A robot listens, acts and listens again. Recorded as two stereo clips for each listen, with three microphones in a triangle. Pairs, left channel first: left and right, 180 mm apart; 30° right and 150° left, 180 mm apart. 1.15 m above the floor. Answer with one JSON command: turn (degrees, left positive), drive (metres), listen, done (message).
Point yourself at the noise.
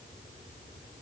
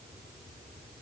{"listen": true}
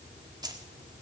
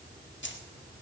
{"turn": -20}
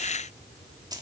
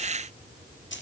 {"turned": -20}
{"turn": -20}
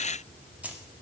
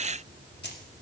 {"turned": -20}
{"done": "Facing the keys jangling, 2 to 4 m away."}